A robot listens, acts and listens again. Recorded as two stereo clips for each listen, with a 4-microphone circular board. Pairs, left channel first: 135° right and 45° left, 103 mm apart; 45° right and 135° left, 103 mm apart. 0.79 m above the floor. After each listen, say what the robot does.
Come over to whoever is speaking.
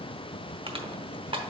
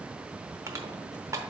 Keep listening.
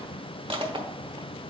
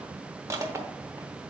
Keep listening.
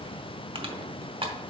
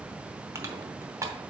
I can't make out anyone speaking, only crushing.